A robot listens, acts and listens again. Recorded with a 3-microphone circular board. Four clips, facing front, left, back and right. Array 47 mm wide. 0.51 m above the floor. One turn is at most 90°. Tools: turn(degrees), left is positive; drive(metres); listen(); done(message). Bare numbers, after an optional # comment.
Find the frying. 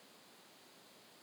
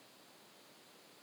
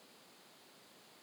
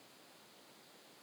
listen()
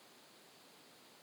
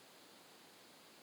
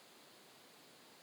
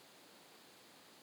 listen()
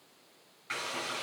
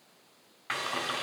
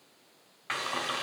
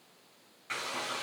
# The frying: 150° left.
turn(90)
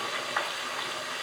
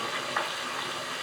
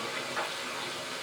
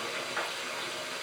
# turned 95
# The frying is now 55° left.
turn(55)
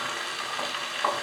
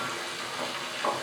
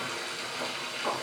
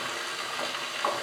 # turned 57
done("Found it: frying, straight ahead.")